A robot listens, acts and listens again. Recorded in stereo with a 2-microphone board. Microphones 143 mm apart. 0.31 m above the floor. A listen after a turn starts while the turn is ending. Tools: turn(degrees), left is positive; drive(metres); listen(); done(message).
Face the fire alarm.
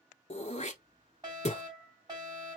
turn(degrees=-30)
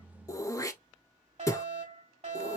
turn(degrees=-120)
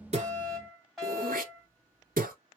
done("Found it: a fire alarm, straight ahead, over 4 m away.")